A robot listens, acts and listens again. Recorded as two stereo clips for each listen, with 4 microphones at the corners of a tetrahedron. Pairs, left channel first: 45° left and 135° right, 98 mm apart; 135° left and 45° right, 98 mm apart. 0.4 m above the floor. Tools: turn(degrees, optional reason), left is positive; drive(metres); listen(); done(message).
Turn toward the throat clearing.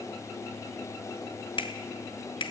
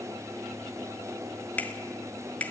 listen()
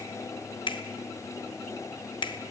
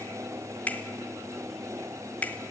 listen()
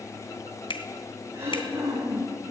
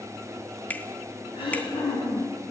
turn(degrees=160, reason="The throat clearing: 160° left.")
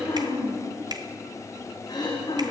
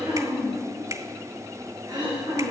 done("Found it: throat clearing, straight ahead, over 4 m away.")